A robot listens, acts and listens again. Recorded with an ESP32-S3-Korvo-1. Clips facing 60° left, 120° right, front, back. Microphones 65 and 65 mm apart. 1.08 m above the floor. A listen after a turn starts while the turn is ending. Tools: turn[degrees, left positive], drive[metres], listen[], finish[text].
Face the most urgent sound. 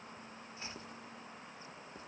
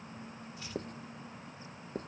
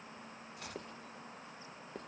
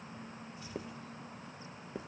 Action: listen[]
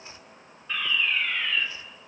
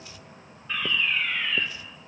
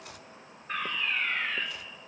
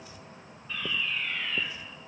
Thought: The fire alarm: 35° right.
Action: turn[-35]
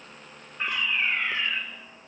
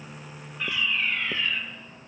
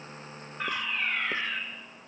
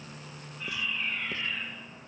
Action: finish[Facing the fire alarm, 2 to 4 m away.]